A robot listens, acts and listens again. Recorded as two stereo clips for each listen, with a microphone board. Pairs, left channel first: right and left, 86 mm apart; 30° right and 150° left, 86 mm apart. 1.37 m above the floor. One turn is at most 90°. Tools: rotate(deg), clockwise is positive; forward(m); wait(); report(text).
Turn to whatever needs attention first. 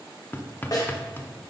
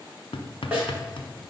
wait()
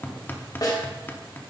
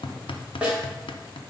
wait()
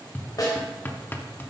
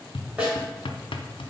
report("I can't make out anything urgent to turn to.")